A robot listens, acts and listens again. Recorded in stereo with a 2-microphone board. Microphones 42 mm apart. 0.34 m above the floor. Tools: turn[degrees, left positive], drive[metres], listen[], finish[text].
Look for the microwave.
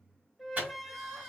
Thought: The microwave: about 45° right or 135° right.
Action: turn[-45]
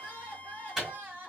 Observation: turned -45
Thought: So it is at 10° right.
Action: turn[-10]
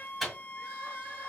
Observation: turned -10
Action: finish[Facing the microwave.]